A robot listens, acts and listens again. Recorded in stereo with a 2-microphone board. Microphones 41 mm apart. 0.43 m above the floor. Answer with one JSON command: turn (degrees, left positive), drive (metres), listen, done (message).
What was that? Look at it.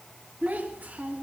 {"turn": -40}
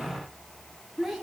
{"done": "Found it: a child speaking, straight ahead."}